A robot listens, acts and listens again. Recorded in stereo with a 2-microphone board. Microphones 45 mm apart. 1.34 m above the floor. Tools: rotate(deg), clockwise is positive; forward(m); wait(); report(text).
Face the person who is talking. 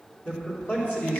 rotate(-40)
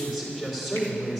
report("Facing the man speaking, 2 to 4 m away.")